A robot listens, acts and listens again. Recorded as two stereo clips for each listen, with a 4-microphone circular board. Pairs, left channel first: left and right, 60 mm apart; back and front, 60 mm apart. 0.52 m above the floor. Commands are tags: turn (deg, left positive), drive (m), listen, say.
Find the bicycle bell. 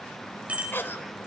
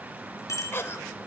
<turn deg="-155"/>
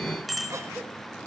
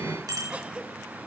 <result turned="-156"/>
<say>Facing the bicycle bell.</say>